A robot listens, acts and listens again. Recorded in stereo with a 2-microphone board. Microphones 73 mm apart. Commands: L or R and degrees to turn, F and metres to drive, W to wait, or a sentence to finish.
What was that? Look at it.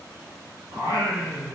R70
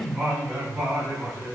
R20
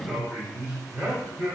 R20
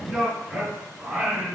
Facing the singing.